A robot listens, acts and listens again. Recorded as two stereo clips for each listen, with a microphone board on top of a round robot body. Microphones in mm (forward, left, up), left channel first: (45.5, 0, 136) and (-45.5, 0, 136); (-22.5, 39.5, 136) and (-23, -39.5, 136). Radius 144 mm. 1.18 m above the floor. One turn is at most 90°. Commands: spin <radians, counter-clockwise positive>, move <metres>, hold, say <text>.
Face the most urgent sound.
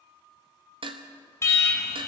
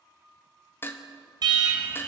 spin -1.05
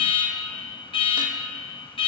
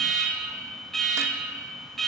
say Facing the alarm, 2 to 4 m away.